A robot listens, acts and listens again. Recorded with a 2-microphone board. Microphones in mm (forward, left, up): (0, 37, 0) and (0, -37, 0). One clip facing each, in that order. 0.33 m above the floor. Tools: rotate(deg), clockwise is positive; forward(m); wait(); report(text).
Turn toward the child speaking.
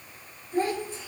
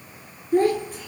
rotate(45)
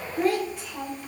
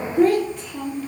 report("Found it: a child speaking, straight ahead, over 4 m away.")